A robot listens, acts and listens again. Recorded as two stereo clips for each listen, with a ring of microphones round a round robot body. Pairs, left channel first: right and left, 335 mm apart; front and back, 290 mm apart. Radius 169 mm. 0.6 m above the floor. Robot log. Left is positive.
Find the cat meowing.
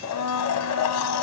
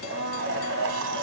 cmd idle
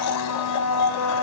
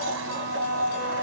cmd idle
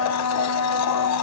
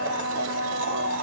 end: I can't make out a cat meowing, only a blender.